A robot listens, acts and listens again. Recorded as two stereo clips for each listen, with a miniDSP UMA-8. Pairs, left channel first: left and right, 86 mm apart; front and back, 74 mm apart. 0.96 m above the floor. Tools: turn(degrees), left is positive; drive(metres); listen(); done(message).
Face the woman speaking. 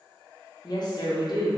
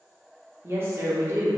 turn(degrees=125)
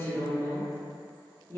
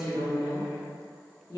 turn(degrees=30)
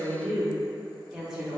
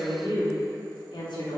done("Facing the woman speaking.")